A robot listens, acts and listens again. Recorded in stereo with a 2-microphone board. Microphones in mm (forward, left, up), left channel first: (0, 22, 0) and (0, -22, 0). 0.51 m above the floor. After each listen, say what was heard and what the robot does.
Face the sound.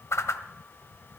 Turn 90° left.
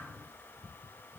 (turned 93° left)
Keep listening.
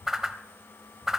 The whoosh is now 10° right. Turn 10° right.
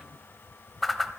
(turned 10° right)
Facing the whoosh, under 1 m away.